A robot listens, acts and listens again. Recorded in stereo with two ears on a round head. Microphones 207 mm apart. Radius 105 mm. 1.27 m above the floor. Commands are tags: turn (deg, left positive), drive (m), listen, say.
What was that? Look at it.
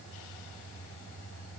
<listen/>
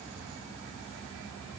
<listen/>
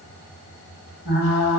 <turn deg="65"/>
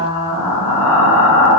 <turn deg="35"/>
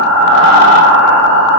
<say>Found it: frying, straight ahead.</say>